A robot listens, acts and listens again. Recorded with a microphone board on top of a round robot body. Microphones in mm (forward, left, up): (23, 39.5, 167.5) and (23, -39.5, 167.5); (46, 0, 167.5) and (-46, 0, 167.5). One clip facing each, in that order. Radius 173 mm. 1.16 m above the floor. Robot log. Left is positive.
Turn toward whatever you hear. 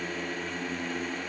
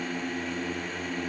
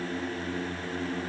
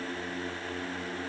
cmd idle
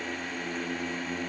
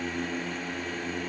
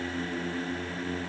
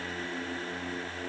cmd idle
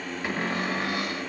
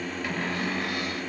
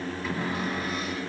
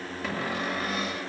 note: The cupboard door: 160° left.
cmd yaw +160
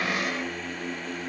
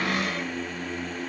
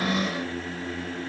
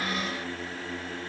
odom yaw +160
note: The cupboard door is now 10° left.
cmd yaw +10
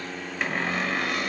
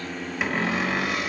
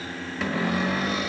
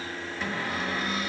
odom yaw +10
end: Found it: a cupboard door, straight ahead, under 1 m away.